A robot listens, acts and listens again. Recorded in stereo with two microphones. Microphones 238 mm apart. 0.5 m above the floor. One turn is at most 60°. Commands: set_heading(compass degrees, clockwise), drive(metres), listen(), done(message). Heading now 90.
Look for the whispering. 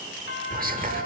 set_heading(125)
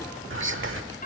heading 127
set_heading(187)
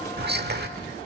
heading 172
set_heading(227)
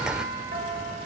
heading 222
done("Facing the whispering.")